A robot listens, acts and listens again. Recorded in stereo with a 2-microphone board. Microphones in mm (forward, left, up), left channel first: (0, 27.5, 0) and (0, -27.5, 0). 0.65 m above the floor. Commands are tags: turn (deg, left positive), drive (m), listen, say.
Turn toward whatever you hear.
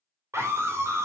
<turn deg="-60"/>
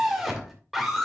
<say>Found it: a scream, straight ahead, 2 to 4 m away.</say>